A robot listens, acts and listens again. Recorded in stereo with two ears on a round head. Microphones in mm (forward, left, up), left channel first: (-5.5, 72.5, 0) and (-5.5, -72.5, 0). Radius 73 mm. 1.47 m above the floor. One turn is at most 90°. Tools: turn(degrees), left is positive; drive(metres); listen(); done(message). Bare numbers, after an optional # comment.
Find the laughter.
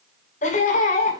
# The laughter: about 45° left or 135° left.
turn(45)
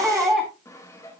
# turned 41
done("Facing the laughter, over 4 m away.")